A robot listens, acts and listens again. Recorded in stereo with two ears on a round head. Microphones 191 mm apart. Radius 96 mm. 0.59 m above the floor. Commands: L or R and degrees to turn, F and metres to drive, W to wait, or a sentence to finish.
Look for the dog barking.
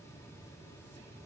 W
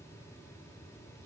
W
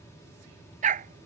R40
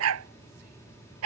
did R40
R95
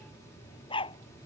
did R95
L25
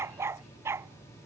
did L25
R10
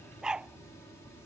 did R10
Found it: a dog barking, straight ahead.